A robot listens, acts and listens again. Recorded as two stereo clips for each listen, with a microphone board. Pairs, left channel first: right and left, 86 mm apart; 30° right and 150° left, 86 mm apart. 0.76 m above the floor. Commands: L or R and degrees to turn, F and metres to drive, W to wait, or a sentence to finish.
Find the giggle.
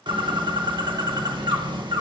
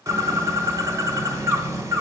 W
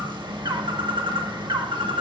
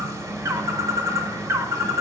W
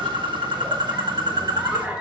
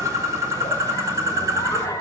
L20
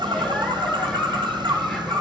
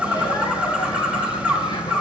W
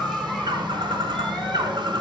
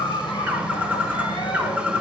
Facing the giggle.